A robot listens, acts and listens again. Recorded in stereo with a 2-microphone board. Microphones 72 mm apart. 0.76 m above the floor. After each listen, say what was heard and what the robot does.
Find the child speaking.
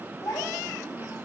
The child speaking: about 45° left or 135° left. Turn 45° left.
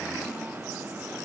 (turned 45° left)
Keep listening.
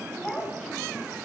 So it is at 15° left. Turn 15° left.
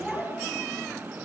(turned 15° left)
Facing the child speaking, over 4 m away.